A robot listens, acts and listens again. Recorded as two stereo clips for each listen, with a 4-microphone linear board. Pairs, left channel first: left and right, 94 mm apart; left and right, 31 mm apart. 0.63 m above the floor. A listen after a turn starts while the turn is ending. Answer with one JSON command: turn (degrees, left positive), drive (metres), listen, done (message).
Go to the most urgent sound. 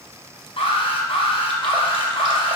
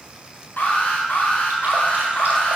{"turn": 90}
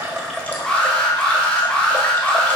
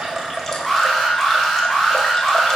{"drive": 1.0}
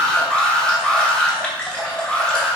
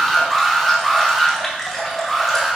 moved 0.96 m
{"drive": 1.0}
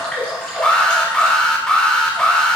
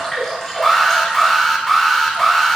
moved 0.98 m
{"drive": 1.0}
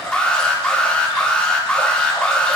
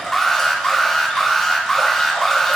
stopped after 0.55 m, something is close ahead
{"turn": 10}
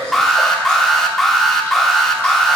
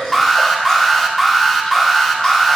{"done": "Arrived at the alarm, straight ahead."}